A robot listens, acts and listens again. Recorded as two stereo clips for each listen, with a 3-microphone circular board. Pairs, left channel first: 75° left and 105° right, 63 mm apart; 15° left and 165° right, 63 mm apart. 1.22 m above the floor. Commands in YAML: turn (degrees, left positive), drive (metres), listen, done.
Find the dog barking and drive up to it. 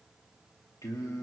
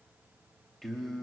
listen: true
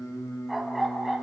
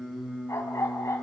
turn: -15
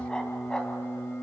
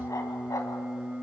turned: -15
drive: 1.0
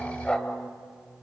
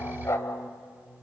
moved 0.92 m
drive: 1.0
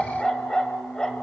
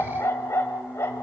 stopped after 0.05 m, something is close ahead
done: "Arrived at the dog barking, straight ahead."